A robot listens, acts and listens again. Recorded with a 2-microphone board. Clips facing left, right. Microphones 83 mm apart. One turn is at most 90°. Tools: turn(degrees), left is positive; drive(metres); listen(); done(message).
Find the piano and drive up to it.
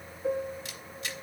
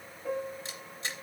turn(degrees=65)
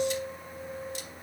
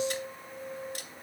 drive(metres=1.0)
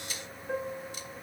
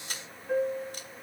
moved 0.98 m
drive(metres=1.0)
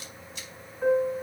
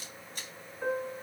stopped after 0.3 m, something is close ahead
done("Something is in my way. I am facing the piano but have not reached it.")